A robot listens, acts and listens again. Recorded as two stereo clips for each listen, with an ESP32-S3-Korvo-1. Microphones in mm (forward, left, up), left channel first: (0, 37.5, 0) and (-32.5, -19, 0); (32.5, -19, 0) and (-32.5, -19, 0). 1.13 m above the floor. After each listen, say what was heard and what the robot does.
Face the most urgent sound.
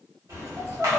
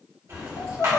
The crying: 25° right. Turn 25° right.
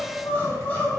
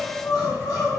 Facing the crying.